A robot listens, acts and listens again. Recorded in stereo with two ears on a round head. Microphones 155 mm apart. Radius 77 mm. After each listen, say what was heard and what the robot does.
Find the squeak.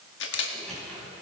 Turn 30° left.
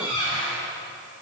So it is at 150° left. Turn 150° left.
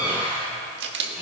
The squeak is now 10° right. Turn 10° right.
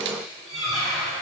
Facing the squeak, over 4 m away.